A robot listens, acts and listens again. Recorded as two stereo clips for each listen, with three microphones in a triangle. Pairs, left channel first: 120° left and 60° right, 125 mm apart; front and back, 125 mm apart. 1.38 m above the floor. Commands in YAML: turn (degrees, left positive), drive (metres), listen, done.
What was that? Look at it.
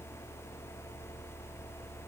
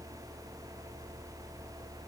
listen: true
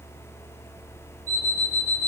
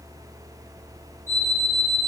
turn: 110
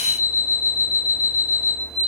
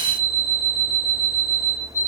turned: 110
done: "Facing the alarm clock, 2 to 4 m away."